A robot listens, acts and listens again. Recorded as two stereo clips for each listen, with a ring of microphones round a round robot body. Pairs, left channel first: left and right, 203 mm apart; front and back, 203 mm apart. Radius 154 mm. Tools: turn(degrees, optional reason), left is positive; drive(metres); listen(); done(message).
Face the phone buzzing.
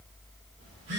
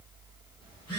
turn(degrees=-75, reason="The phone buzzing: 75° right.")
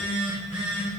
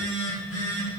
turn(degrees=-10, reason="The phone buzzing is now 10° right.")
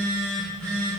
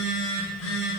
done("Found it: a phone buzzing, straight ahead, 2 to 4 m away.")